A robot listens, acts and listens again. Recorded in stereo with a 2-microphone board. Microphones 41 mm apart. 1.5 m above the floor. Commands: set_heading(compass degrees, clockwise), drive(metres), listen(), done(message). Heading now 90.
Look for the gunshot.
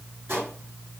set_heading(155)
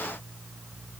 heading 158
listen()
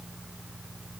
done("I heard a gunshot, but can't make it out now. It was about 5° left or 50° right.")